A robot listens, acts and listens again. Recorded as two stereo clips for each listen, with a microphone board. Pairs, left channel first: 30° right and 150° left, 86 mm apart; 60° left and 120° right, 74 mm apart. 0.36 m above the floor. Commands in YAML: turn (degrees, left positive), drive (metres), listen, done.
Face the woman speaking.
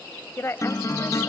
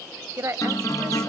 turn: -80
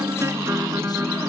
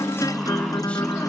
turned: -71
turn: -10
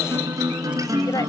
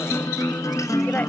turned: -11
listen: true
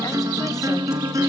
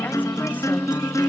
done: "I heard a woman speaking from this way, but can't make it out now."